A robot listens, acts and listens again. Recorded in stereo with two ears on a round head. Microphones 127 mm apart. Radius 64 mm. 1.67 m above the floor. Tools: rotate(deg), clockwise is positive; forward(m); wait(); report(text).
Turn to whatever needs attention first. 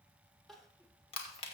rotate(-30)
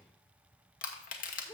rotate(-145)
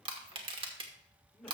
report("Facing the crying.")